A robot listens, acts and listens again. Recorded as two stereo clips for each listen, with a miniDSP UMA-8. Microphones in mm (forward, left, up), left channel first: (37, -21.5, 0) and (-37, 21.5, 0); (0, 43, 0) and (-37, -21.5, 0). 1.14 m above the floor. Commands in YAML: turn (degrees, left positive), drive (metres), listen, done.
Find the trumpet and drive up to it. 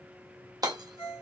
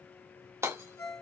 listen: true
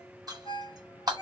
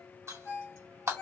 listen: true
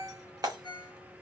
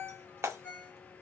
done: "I can't make out a trumpet to turn to."